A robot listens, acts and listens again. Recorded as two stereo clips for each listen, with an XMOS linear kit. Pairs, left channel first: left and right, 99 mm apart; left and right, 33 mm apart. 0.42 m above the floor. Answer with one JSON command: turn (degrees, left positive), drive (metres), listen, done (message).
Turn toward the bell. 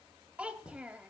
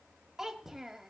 {"listen": true}
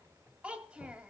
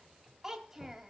{"listen": true}
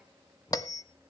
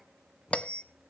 {"turn": 40}
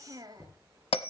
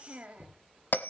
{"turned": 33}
{"turn": 110}
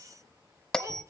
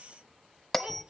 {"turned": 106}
{"done": "Found it: a bell, straight ahead, under 1 m away."}